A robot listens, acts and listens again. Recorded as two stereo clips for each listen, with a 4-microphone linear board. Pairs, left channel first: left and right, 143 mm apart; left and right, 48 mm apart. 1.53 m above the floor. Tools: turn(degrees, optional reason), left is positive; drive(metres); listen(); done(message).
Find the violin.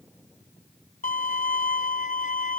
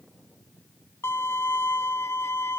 turn(degrees=65, reason="The violin: about 65° left or 115° left.")
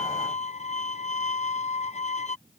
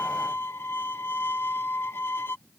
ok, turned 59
turn(degrees=55, reason="So it is at 55° left.")
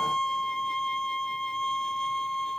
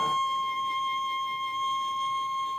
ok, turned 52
done("Found it: a violin, straight ahead.")